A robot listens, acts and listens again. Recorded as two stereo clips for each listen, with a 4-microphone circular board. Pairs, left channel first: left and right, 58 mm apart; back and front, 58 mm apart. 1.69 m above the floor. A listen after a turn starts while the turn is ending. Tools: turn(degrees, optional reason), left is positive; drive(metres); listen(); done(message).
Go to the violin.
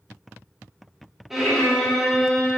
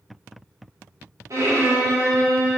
drive(metres=1.0)
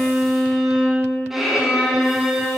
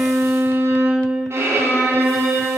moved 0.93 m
turn(degrees=-10, reason="The violin is now 10° right.")
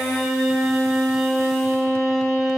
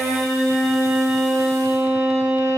drive(metres=1.0)
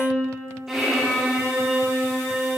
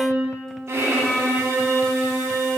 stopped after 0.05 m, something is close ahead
turn(degrees=-10, reason="The violin is now 10° right.")
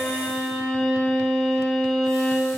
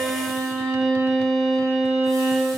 done("Arrived at the violin, straight ahead.")